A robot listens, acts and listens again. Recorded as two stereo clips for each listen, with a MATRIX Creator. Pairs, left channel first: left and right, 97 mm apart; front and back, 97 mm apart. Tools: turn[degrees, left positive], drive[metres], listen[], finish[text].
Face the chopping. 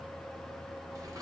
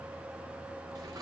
Action: listen[]
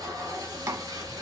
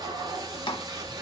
Thought: The chopping: 30° right.
Action: turn[-30]
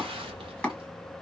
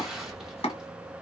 Thought: The chopping is now 10° left.
Action: turn[10]
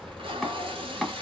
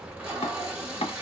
Action: finish[Facing the chopping.]